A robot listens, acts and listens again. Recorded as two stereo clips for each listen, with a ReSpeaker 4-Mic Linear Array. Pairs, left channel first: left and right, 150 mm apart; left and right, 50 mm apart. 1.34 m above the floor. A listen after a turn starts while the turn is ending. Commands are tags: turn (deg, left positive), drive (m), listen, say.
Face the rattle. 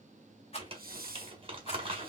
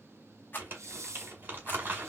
<turn deg="40"/>
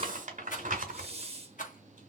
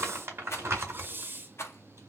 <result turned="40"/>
<turn deg="90"/>
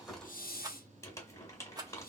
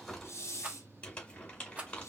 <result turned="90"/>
<turn deg="-30"/>
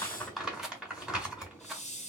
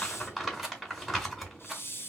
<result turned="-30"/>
<say>Facing the rattle, 1 to 2 m away.</say>